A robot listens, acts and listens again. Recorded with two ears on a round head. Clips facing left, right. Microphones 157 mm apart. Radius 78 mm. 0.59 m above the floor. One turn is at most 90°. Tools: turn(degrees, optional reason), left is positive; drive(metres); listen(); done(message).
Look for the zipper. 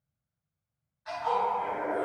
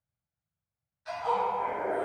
turn(degrees=-30, reason="The zipper: about 30° right or 150° right.")
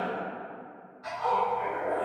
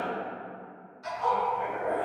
turn(degrees=-90, reason="So it is at 115° right.")
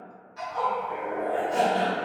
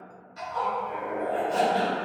turn(degrees=-50, reason="The zipper is now 50° right.")
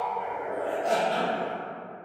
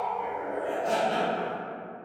done("Found it: a zipper, straight ahead.")